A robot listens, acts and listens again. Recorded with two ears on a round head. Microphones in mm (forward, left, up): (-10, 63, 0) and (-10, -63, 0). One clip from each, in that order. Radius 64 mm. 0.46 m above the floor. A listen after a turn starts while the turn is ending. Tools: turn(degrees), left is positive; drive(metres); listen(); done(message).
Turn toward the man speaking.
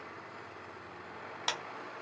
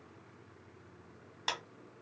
listen()
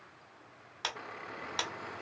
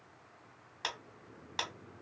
listen()
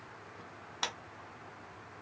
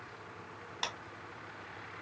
done("I can't make out a man speaking to turn to.")